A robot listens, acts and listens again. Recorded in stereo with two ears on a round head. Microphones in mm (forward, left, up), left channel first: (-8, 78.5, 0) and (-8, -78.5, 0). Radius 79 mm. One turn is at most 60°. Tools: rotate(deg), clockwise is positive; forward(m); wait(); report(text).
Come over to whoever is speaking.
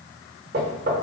wait()
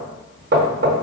wait()
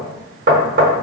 report("I can't make out anyone speaking to turn to.")